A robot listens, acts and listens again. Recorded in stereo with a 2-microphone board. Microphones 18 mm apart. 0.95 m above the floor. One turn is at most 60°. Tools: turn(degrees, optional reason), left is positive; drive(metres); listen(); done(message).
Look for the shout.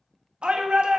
turn(degrees=-60, reason="The shout: about 65° right or 115° right.")
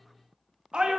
turn(degrees=-50, reason="So it is at 50° right.")
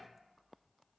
listen()
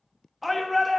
done("Facing the shout.")